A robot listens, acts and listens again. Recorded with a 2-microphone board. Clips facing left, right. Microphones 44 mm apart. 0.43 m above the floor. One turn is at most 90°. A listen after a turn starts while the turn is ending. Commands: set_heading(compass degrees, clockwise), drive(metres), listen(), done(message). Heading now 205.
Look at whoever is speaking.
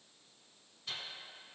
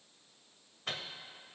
listen()
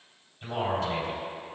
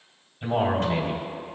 set_heading(220)
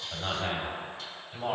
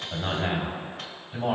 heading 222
done("Found it: a man speaking, straight ahead, 2 to 4 m away.")